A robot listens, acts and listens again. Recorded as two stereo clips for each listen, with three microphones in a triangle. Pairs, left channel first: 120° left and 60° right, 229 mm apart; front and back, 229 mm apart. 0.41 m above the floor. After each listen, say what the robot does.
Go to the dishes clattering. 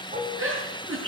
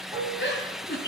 Turn 110° right.
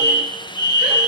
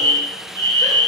Keep listening.
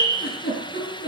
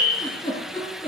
Keep listening.
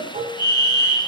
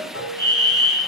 Drive 1.0 m forward.
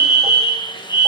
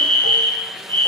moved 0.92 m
Keep listening.
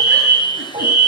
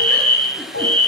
Drive 1.0 m forward.
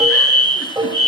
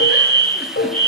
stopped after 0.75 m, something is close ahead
Turn 10° left.
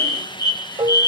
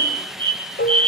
Arrived at the dishes clattering, straight ahead.